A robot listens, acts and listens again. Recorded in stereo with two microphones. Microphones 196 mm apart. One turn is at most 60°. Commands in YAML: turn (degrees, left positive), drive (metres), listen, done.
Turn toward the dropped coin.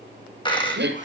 turn: 25
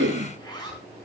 listen: true
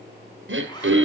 done: "I heard a dropped coin, but can't make it out now. It was about straight ahead or 130° left."